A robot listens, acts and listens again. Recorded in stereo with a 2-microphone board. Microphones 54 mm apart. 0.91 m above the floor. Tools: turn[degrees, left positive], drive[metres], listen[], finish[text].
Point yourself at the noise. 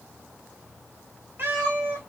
Thought: The cat meowing: about 35° right or 145° right.
Action: turn[-35]
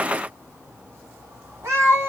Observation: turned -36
Thought: So it is at 125° right.
Action: turn[-125]
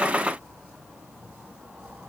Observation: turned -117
Thought: Nothing new. It was at 10° right.
Action: turn[-10]
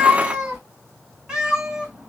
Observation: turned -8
Thought: The cat meowing is now 15° right.
Action: turn[-15]
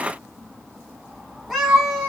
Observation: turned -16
Action: finish[Found it: a cat meowing, straight ahead.]